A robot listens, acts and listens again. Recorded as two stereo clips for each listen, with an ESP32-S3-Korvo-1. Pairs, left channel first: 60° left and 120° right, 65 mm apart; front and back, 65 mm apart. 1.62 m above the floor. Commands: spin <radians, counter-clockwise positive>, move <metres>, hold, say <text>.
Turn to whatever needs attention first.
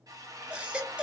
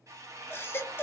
spin -0.87
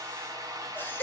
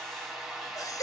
say Found it: a baby crying, straight ahead.